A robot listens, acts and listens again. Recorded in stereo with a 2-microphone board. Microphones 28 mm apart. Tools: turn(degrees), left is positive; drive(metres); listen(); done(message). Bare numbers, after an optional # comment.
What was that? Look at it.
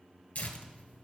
# The tearing paper: about 70° left or 110° left.
turn(70)
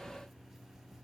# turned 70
listen()
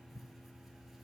done("Found it: tearing paper, straight ahead, 1 to 2 m away.")